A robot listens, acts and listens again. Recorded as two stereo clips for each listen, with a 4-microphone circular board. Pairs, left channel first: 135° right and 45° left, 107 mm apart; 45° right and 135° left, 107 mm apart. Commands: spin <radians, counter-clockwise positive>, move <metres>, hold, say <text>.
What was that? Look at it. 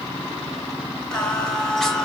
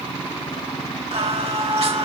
spin 2.44
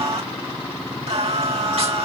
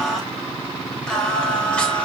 spin 0.61
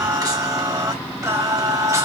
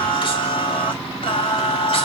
spin -0.26
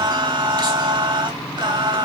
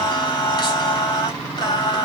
say Found it: singing, straight ahead.